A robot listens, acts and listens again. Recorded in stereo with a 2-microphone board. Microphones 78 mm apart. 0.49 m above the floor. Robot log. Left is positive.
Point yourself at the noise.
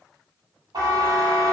note: The buzzer: about 75° right or 105° right.
cmd yaw -75
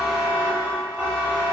note: So it is at 20° right.
cmd yaw -20
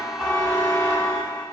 end: Found it: a buzzer, straight ahead, under 1 m away.